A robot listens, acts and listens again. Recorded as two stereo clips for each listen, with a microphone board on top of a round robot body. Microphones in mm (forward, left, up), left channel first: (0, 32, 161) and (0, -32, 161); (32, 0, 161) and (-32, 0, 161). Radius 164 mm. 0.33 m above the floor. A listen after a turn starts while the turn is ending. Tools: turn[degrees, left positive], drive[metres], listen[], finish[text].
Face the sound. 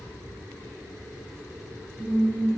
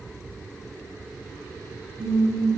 Thought: The singing: 160° right.
Action: turn[-160]
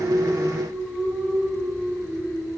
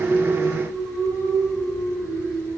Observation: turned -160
Thought: The singing is now 10° right.
Action: turn[-10]
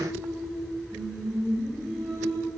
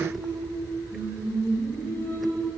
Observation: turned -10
Action: finish[Facing the singing, over 4 m away.]